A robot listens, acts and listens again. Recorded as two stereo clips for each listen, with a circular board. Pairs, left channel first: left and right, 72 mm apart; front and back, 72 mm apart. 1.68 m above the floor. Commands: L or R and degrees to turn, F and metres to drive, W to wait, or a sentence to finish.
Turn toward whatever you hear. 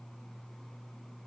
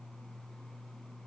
W
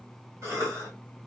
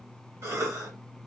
R135
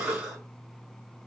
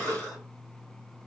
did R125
R10
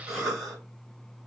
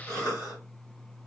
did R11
Found it: a cough, straight ahead.